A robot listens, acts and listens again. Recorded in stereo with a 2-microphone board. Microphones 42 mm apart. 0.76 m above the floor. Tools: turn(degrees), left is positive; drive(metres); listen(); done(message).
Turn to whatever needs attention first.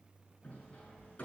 listen()
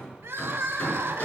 turn(degrees=-70)
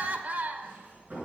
turn(degrees=-40)
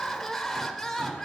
done("Found it: crying, straight ahead.")